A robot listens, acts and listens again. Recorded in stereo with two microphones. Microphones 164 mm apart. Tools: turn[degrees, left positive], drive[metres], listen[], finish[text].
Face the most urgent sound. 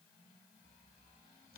Action: listen[]
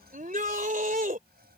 Thought: The shout: about 55° right or 125° right.
Action: turn[-55]
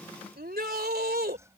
Thought: So it is at 70° right.
Action: turn[-70]
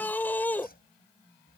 Thought: The shout is now 10° left.
Action: turn[10]
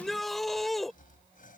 Action: finish[Facing the shout.]